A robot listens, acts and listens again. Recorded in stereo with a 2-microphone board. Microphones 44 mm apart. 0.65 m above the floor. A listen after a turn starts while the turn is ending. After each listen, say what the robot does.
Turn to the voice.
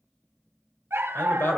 Turn 70° left.
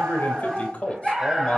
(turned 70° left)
Turn 25° left.
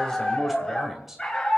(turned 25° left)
Turn 10° right.
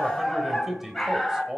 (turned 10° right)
Turn 15° right.
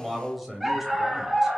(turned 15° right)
Found it: a man speaking, straight ahead, 2 to 4 m away.